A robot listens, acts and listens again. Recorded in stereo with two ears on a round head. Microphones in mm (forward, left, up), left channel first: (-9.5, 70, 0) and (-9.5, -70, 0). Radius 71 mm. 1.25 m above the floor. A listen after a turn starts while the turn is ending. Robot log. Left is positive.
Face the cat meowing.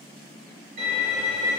cmd idle
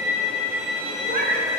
note: The cat meowing: about 60° right or 120° right.
cmd yaw -60
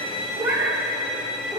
note: So it is at 10° right.
cmd yaw -10
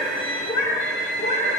note: The cat meowing is now 45° left.
cmd yaw +45
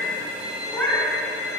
note: The cat meowing is now 10° left.
cmd yaw +10
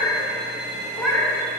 end: Found it: a cat meowing, straight ahead, 2 to 4 m away.